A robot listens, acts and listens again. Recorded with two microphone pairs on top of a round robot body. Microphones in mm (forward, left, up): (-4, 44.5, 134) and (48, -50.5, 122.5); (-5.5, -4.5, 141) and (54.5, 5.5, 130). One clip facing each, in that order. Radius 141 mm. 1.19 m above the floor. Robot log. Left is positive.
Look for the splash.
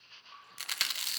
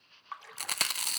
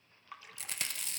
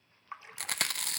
note: The splash: 60° right.
cmd yaw -60
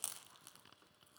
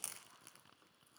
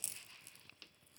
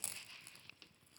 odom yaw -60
end: I heard a splash from this way, but can't make it out now.